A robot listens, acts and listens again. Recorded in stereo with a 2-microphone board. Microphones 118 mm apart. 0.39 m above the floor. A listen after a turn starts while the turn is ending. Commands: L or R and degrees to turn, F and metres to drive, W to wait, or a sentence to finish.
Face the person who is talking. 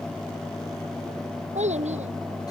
R90
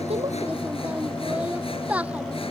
R10
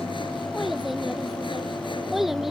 Found it: a child speaking, straight ahead.